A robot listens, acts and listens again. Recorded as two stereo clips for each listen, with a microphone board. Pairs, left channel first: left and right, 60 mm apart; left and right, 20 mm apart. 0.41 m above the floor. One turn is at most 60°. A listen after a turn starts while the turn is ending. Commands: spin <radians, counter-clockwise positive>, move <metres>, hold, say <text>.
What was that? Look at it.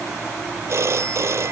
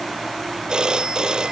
spin -0.96
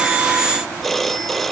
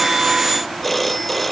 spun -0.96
say Found it: a phone ringing, straight ahead.